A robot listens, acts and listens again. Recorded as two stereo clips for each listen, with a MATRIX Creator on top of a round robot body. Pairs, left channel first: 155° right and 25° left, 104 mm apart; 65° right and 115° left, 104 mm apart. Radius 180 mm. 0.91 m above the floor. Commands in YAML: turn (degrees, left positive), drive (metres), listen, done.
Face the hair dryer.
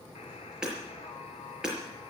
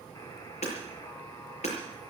listen: true
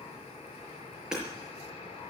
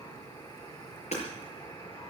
listen: true
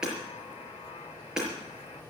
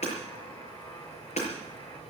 done: "I can't make out a hair dryer, only hammering."